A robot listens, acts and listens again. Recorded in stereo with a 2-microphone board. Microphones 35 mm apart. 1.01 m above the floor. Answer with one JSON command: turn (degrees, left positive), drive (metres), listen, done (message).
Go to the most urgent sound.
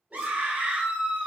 {"turn": -50}
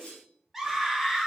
{"drive": 1.0}
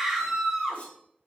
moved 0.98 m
{"drive": 1.0}
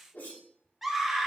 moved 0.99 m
{"drive": 1.0}
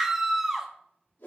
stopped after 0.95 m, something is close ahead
{"turn": -10}
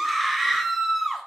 {"done": "I am next to the scream."}